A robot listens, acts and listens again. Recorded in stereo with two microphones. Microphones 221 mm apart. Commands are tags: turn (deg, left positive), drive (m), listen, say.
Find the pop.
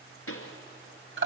<turn deg="90"/>
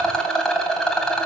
<say>I heard a pop from this way, but can't make it out now.</say>